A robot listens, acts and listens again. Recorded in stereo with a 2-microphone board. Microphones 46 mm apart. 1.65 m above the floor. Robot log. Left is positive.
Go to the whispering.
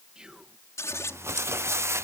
note: The whispering: about 20° right or 160° right.
cmd yaw -20
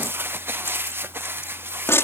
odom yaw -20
cmd idle
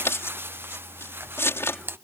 cmd idle
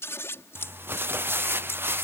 end: I heard whispering, but can't make it out now. It was about straight ahead or 140° right. I did not reach it.